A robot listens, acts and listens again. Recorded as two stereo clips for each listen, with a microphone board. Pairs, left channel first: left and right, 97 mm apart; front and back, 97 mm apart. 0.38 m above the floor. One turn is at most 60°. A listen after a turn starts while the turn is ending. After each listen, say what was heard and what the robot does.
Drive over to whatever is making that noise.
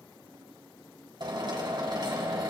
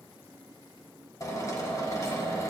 The drill: 55° right. Turn 55° right.
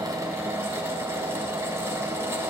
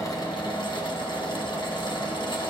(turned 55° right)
The drill is now 30° right. Turn 30° right.
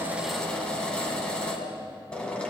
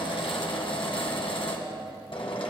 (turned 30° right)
The drill is now 10° left. Turn 10° left.
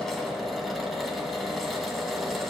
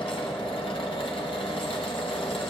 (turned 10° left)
Drive 1.0 m forward.
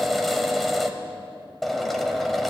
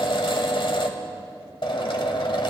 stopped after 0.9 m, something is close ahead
I am next to the drill.